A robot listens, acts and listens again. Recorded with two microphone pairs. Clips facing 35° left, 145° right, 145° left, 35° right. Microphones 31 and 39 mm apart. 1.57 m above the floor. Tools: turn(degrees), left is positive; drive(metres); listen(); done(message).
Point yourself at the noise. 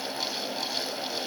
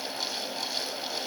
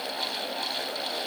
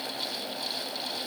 listen()
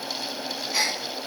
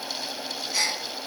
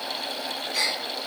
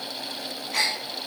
turn(degrees=-35)
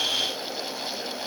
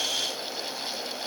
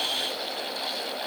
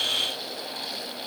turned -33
done("Facing where the gasp came from. I can't hear it now.")